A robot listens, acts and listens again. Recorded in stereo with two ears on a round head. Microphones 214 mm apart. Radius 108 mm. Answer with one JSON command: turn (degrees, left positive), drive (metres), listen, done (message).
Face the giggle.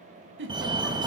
{"turn": -55}
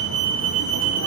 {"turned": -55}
{"listen": true}
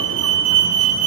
{"listen": true}
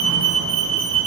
{"done": "I heard a giggle, but can't make it out now. It was about straight ahead or 70° right."}